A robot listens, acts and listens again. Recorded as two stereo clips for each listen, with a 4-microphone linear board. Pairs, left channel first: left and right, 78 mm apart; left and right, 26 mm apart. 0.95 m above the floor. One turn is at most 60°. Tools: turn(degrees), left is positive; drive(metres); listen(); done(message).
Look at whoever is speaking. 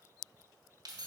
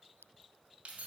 listen()
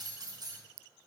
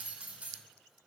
listen()
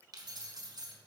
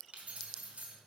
done("I can't make out anyone speaking, only keys jangling.")